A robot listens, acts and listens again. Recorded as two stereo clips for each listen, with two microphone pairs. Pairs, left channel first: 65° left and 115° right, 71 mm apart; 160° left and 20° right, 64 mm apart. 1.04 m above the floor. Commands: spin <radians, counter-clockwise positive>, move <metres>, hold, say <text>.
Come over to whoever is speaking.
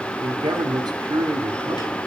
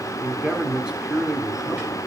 spin -1.66
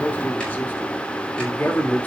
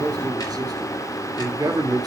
move 1.0
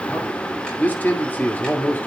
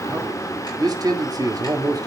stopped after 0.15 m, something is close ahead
say Blocked. The man speaking is further on, straight ahead.